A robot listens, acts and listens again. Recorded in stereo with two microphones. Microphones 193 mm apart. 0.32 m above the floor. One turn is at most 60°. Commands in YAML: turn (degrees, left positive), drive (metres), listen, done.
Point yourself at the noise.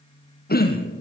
turn: 55
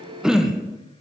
done: "Found it: throat clearing, straight ahead."